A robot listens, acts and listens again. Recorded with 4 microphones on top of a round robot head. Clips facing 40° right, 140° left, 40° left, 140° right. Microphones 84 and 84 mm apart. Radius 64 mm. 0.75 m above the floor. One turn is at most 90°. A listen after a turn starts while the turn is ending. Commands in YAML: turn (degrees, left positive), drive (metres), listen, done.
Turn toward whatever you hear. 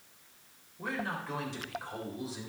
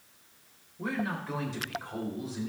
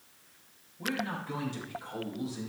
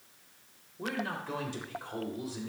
turn: -90
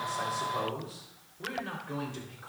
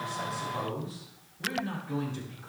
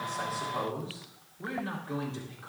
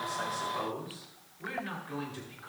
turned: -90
turn: -15
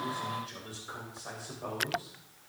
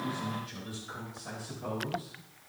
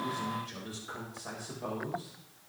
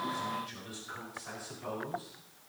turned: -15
turn: 10
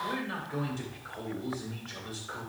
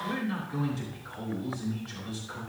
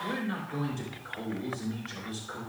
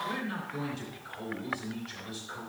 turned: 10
done: "Facing the man speaking."